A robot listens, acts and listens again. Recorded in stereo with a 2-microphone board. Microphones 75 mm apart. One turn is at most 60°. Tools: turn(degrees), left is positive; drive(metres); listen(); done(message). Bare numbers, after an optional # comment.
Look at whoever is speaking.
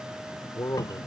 # The man speaking: about 45° left or 135° left.
turn(45)
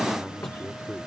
done("Found it: a man speaking, straight ahead.")